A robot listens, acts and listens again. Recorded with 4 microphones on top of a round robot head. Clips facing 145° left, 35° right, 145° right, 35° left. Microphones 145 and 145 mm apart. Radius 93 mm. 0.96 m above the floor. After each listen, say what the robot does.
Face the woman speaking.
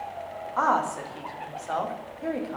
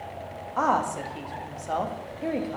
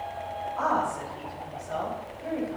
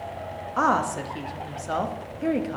Turn 40° left.
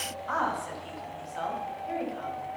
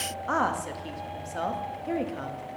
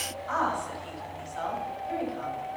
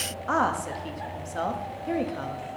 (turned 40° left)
Facing the woman speaking, 1 to 2 m away.